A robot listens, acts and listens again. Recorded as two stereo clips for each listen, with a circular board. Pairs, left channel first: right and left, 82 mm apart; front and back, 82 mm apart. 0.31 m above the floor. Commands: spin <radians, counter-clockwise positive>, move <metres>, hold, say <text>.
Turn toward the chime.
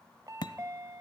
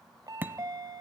spin 2.44
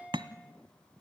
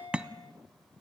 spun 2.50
say Found it: a chime, straight ahead, 1 to 2 m away.